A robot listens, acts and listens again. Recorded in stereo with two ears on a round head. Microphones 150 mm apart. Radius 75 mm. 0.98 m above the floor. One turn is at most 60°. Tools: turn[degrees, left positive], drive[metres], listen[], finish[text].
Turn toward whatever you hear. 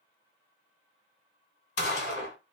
Thought: The gunshot: about 70° left or 110° left.
Action: turn[60]
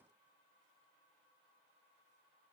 Action: listen[]
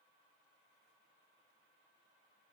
Action: finish[I heard a gunshot, but can't make it out now. It was about 10° left or 50° left.]